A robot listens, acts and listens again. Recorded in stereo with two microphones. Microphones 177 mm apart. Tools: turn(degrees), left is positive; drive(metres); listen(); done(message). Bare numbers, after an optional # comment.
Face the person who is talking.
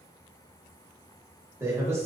# The man speaking: about 15° right or 165° right.
turn(-15)
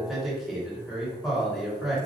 done("Found it: a man speaking, straight ahead.")